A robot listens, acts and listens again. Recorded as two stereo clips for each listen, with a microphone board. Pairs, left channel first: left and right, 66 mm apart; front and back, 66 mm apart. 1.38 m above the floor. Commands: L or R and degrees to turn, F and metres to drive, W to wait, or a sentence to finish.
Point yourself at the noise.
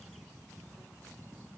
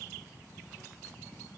W
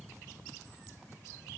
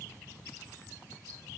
W
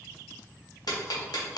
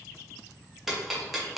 L95
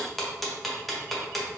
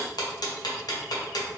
Found it: ticking, straight ahead.